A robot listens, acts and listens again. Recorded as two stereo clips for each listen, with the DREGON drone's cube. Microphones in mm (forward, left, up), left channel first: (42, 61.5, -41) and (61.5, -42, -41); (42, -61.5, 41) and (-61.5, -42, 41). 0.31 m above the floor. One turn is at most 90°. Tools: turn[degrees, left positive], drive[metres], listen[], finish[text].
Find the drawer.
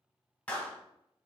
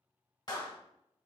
Action: listen[]
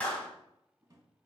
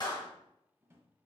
Thought: The drawer: 125° right.
Action: turn[-90]
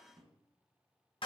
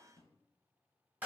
Thought: The drawer is now 50° right.
Action: turn[-50]
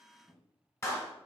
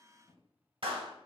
Action: finish[Found it: a drawer, straight ahead.]